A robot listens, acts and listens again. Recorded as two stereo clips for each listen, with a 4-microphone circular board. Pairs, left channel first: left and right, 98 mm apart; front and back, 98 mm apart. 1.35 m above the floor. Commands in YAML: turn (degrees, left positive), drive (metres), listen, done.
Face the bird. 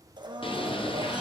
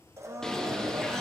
turn: 85
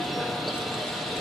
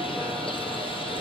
done: "Facing the bird."